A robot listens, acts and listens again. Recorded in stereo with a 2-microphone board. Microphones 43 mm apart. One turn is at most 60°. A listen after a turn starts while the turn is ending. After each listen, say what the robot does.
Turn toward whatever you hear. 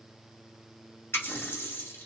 Turn 60° left.
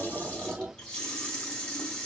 Turn 20° left.
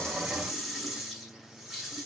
Found it: a running tap, straight ahead.